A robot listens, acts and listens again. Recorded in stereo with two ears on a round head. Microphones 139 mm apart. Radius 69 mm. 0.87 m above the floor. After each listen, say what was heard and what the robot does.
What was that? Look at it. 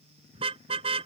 The car horn: about 40° right or 140° right. Turn 40° right.
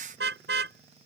So it is at 100° right. Turn 100° right.
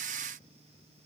Keep listening.
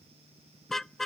Found it: a car horn, straight ahead.